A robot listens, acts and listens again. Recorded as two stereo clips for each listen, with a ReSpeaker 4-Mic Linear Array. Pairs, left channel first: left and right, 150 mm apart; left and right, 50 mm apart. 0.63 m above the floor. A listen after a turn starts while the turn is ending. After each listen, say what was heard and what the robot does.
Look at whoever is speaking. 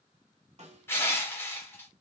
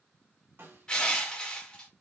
Keep listening.
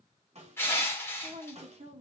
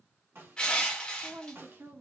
The woman speaking: about 50° right or 130° right. Turn 50° right.
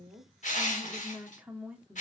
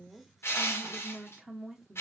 So it is at 10° right. Turn 10° right.
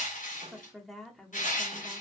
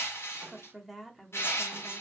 Found it: a woman speaking, straight ahead, 1 to 2 m away.